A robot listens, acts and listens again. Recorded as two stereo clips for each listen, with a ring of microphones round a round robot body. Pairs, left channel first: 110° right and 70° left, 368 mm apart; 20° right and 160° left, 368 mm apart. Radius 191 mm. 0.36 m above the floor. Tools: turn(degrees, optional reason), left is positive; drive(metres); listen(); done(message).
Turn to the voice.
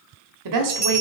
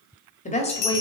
turn(degrees=50, reason="The woman speaking: 50° left.")
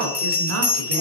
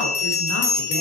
listen()
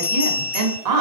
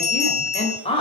turn(degrees=50, reason="The woman speaking is now 50° left.")
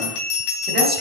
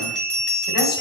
listen()
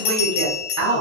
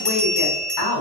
turn(degrees=15, reason="The woman speaking is now 15° left.")
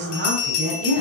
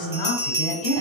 turn(degrees=10, reason="The woman speaking is now 10° left.")
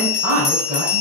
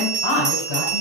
done("Facing the woman speaking.")